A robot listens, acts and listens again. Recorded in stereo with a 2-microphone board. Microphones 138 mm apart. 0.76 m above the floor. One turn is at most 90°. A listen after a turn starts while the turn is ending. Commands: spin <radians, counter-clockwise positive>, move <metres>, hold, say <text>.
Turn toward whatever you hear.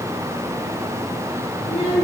spin 0.87
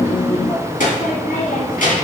spin 1.40
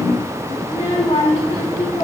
spin 0.87
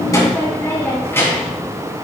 spin 0.35
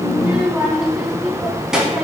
say Found it: a child speaking, straight ahead, 2 to 4 m away.